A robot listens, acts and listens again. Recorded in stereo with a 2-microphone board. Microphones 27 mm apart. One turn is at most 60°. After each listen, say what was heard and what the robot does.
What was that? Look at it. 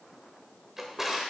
Turn 30° right.
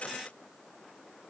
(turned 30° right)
Keep listening.
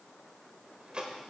So it is at 135° right. Turn 60° right.
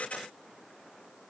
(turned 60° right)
Nothing new. It was at 75° right. Turn 60° right.
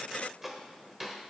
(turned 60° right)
The drawer is now 15° right. Turn 15° right.
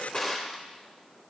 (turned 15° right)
Found it: a drawer, straight ahead, 1 to 2 m away.